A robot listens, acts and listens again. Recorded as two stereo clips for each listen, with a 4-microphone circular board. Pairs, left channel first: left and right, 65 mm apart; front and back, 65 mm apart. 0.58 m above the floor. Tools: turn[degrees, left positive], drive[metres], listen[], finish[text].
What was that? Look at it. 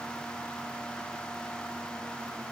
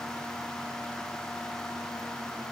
Action: listen[]
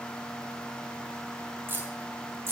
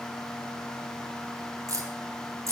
Thought: The keys jangling: 140° right.
Action: turn[-140]
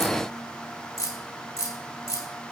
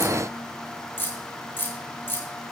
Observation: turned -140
Thought: The keys jangling is now 55° left.
Action: turn[55]
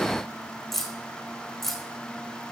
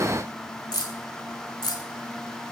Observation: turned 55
Action: finish[Facing the keys jangling, 1 to 2 m away.]